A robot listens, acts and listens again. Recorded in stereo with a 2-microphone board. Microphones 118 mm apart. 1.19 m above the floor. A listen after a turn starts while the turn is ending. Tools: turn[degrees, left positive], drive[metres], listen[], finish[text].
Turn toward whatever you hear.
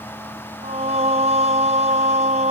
Thought: The singing: about 75° right or 105° right.
Action: turn[-75]
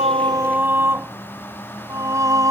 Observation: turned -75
Thought: So it is at 30° right.
Action: turn[-30]
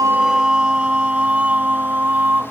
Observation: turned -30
Thought: The singing is now 15° right.
Action: turn[-15]
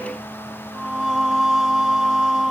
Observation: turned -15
Action: finish[Facing the singing.]